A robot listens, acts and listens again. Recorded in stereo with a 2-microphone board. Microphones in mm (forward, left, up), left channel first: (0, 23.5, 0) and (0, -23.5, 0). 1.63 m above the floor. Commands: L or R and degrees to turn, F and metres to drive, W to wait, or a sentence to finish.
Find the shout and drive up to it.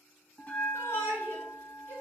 L70
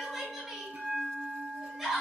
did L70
F1.0
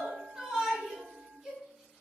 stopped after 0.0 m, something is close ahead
R10
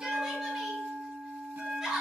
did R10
Something is in my way. I am facing the shout but have not reached it.